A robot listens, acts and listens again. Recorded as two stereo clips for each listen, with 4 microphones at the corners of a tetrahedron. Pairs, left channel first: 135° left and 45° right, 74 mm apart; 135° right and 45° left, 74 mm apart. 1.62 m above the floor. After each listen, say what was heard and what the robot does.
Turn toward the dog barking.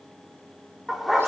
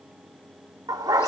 The dog barking: 40° left. Turn 40° left.
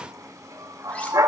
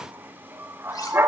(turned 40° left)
The dog barking is now 10° right. Turn 10° right.
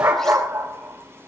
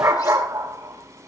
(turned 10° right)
Found it: a dog barking, straight ahead.